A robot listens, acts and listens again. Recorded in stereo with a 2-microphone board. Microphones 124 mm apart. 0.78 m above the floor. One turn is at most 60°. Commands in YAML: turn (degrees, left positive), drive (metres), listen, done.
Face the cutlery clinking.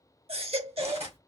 turn: -55
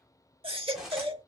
done: "Facing the cutlery clinking, 1 to 2 m away."